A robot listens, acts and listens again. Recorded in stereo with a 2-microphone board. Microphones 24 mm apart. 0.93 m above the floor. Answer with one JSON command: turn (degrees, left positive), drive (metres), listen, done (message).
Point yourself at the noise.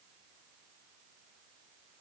{"listen": true}
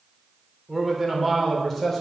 {"turn": 30}
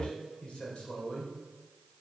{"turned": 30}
{"turn": 130}
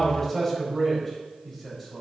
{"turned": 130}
{"turn": 10}
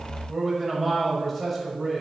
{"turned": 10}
{"done": "Found it: a man speaking, straight ahead, over 4 m away."}